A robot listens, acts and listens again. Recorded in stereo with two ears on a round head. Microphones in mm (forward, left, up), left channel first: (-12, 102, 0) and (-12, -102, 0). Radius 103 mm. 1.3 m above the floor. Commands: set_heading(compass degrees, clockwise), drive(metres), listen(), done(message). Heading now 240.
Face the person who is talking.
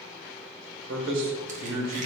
set_heading(305)
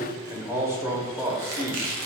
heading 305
set_heading(320)
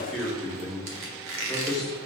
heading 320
done("Found it: a man speaking, straight ahead, under 1 m away.")